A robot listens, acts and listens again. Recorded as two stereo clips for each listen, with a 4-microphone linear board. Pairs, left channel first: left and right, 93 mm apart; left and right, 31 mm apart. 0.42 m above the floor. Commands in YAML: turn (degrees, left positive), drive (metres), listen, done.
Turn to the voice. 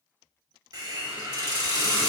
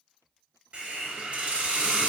listen: true
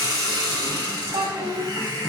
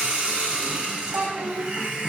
turn: -70
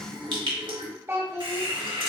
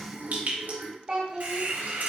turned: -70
turn: -30
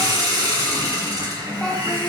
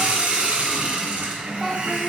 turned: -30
done: "Found it: a child speaking, straight ahead, 1 to 2 m away."